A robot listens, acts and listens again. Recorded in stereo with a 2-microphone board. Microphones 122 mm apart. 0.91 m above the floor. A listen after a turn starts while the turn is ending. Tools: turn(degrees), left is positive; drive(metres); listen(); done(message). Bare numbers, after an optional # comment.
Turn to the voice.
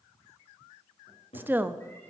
# The woman speaking: about 15° right or 165° right.
turn(-15)
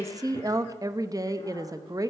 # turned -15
# So it is at 150° right.
turn(-150)
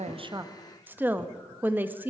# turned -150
# The woman speaking is now 15° right.
turn(-15)
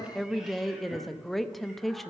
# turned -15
done("Found it: a woman speaking, straight ahead, under 1 m away.")